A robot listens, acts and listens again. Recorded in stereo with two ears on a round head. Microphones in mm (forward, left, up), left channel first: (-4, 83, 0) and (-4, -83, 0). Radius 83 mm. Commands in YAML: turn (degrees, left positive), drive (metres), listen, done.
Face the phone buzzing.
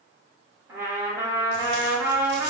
listen: true
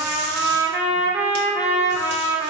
listen: true
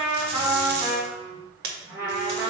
turn: -70
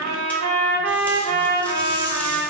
listen: true
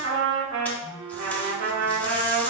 turn: -35
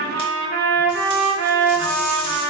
listen: true
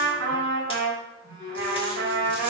turn: -15
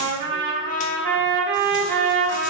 listen: true
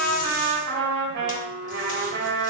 done: "Found it: a phone buzzing, straight ahead, 1 to 2 m away."